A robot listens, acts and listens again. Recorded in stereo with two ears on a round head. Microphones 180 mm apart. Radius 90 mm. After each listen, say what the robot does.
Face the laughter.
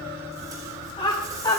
Turn 20° left.
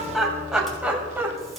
Turn 10° right.
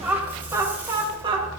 Turn 25° right.
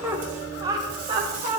Turn 35° right.
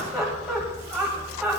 Facing the laughter.